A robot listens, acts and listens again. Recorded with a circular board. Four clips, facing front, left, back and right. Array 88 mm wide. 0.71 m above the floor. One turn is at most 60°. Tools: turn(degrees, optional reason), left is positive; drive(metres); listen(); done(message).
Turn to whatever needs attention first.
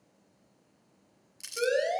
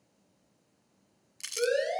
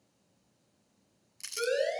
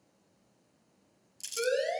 turn(degrees=20, reason="The siren: 20° left.")
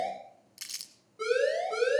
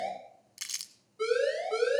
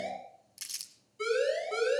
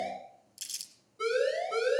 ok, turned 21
done("Found it: a siren, straight ahead.")